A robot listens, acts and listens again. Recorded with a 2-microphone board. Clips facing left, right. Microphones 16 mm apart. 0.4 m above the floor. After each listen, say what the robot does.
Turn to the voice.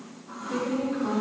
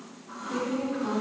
Turn 45° left.
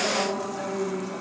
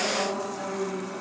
Turn 30° left.
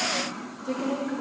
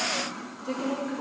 Turn 10° right.
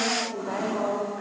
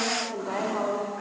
Turn 25° right.
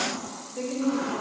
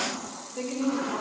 Facing the woman speaking.